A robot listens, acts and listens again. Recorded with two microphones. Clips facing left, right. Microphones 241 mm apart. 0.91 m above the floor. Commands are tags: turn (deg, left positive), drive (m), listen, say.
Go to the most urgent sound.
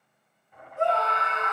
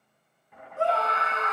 <turn deg="-35"/>
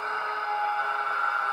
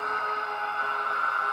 <turn deg="-105"/>
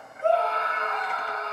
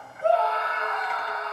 <turn deg="-10"/>
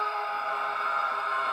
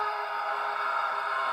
<drive m="1.0"/>
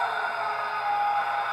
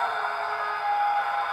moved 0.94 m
<drive m="1.0"/>
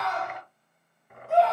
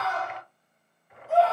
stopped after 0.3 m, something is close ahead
<say>I am next to the scream.</say>